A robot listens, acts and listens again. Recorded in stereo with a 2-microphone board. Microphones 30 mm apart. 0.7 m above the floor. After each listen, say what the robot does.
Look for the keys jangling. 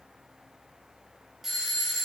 Keep listening.
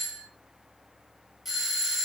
Keep listening.
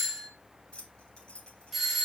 Turn 40° left.
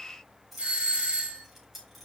Facing the keys jangling.